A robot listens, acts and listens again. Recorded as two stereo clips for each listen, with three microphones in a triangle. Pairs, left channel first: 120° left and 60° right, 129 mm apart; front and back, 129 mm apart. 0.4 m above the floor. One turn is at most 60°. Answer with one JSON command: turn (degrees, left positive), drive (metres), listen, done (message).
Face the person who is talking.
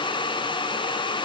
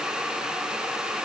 {"listen": true}
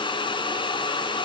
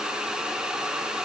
{"listen": true}
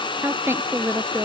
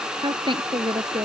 {"turn": -60}
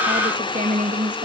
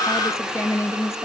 {"turn": -60}
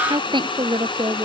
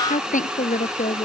{"done": "Found it: a woman speaking, straight ahead."}